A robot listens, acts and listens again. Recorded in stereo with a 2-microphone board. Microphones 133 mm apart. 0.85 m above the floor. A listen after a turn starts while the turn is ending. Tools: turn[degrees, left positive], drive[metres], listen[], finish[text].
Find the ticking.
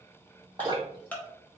Action: turn[30]
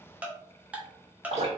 Thought: So it is at 10° right.
Action: turn[-10]
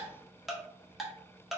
Action: finish[Found it: ticking, straight ahead, 1 to 2 m away.]